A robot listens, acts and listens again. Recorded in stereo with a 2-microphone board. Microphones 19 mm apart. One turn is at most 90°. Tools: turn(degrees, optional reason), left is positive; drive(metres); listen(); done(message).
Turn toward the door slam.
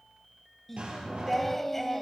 turn(degrees=-70, reason="The door slam: about 70° right or 110° right.")
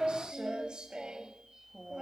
listen()
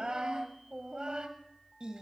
done("I heard a door slam, but can't make it out now. It was about straight ahead or 40° right.")